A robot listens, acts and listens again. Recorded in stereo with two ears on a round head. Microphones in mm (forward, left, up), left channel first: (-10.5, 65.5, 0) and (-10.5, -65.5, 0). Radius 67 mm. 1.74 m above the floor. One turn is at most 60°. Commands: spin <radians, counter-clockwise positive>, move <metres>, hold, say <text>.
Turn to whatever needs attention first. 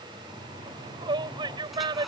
spin -0.61
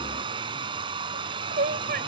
spin -1.05
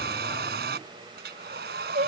spin -0.87
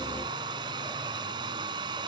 hold
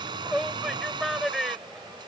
say Facing the shout.